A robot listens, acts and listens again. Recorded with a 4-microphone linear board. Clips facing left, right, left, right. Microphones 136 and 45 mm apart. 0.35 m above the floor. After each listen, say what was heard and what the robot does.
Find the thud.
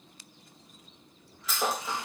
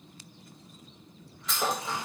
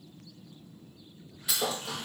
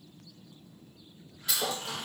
Turn 30° left.
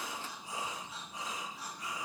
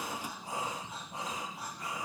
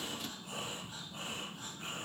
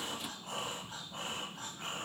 Keep listening.
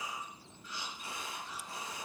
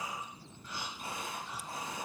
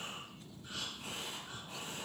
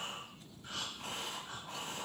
I heard a thud, but can't make it out now. It was about 25° right or 145° left.